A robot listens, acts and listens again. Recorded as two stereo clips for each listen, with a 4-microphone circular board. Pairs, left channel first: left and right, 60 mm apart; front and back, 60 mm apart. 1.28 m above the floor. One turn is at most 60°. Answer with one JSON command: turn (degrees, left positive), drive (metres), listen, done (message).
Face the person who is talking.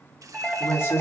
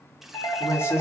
{"turn": 45}
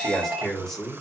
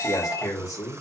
{"turn": 10}
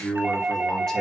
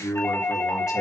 {"turn": 10}
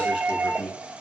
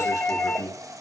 {"done": "Facing the man speaking."}